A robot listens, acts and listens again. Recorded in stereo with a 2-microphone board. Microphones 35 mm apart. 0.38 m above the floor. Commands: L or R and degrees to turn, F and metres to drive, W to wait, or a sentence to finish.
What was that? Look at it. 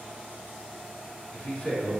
L35
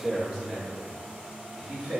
R20
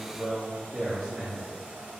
R15
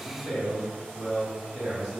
R10
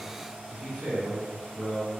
Found it: a man speaking, straight ahead, 2 to 4 m away.